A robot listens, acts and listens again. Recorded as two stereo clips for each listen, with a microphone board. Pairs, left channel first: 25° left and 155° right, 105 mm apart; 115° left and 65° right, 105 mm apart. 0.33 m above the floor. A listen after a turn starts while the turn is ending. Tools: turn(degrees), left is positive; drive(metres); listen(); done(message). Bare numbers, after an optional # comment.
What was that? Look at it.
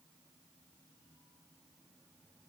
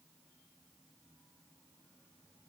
listen()
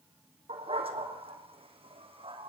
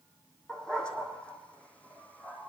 # The dog barking: 175° right.
turn(-175)
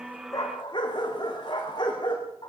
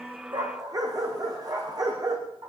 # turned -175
# The dog barking is now 20° right.
turn(-20)
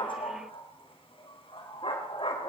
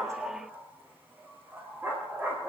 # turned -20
done("Facing the dog barking.")